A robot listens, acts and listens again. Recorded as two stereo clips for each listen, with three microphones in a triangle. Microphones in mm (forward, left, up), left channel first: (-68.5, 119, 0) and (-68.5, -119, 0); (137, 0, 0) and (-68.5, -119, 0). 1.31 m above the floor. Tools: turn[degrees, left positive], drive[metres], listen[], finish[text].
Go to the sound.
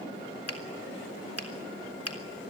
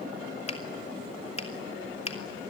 Thought: The finger snap: 90° left.
Action: turn[90]
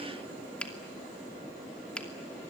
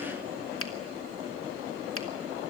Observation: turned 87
Action: drive[1.0]
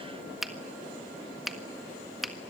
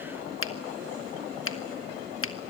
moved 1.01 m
Action: drive[1.0]
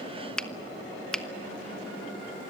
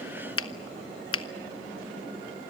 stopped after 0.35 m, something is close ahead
Action: finish[Arrived at the finger snap, straight ahead.]